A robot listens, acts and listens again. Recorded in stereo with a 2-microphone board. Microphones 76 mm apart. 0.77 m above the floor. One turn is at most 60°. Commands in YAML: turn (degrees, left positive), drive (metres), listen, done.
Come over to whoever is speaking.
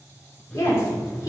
turn: 45
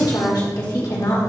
turn: 60
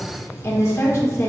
turn: 40
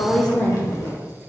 turn: 15
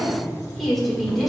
drive: 1.0
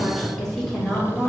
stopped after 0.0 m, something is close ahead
done: "Something is in my way. I am facing the woman speaking but have not reached it."